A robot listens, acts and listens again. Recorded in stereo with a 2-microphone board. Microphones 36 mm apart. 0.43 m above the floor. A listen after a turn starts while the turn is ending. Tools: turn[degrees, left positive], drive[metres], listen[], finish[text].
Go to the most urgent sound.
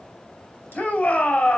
Thought: The shout: about 45° left or 135° left.
Action: turn[45]
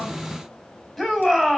Action: drive[1.0]
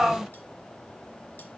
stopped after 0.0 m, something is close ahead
Action: finish[Blocked. The shout is further on, straight ahead.]